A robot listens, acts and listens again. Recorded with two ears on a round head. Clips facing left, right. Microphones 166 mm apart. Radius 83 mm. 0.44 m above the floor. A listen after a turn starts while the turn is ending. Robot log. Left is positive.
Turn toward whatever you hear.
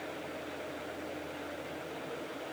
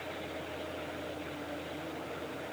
cmd idle
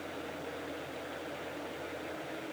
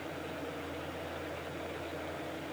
cmd idle
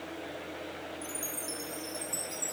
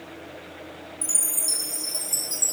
cmd yaw -90
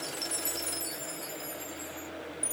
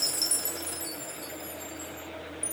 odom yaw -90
end: Found it: a chime, straight ahead.